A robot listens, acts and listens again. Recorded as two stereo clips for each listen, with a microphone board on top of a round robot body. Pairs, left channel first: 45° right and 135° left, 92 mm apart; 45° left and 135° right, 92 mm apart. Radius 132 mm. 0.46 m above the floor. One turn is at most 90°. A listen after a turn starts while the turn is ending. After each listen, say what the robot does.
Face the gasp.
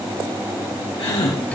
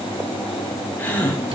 Turn 25° right.
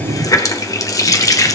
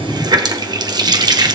Facing where the gasp came from. I can't hear it now.